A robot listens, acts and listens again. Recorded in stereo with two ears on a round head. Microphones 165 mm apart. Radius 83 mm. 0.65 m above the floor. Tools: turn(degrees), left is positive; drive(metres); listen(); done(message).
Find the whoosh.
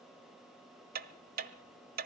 listen()
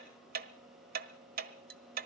listen()
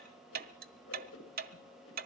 turn(degrees=90)
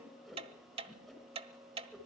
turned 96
done("Facing the whoosh, over 4 m away.")